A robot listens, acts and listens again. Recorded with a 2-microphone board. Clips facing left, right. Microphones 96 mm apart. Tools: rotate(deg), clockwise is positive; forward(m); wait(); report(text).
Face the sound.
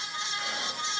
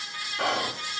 rotate(75)
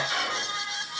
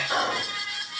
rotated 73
rotate(30)
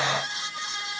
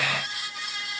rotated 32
wait()
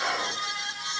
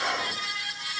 report("Facing the whispering.")